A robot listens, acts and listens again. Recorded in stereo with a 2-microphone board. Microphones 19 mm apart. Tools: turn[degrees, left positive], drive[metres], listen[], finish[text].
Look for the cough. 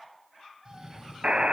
Thought: The cough: about 45° right or 135° right.
Action: turn[-45]
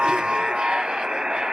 Action: listen[]
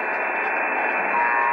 Action: listen[]
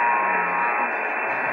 Action: finish[I heard a cough, but can't make it out now. It was about straight ahead or 90° right.]